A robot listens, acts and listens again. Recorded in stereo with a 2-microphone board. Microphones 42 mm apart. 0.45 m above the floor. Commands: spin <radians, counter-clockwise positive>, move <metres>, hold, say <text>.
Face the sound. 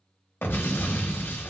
spin 1.22
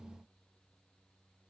hold
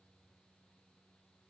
say I heard an explosion, but can't make it out now. It was about straight ahead or 40° left.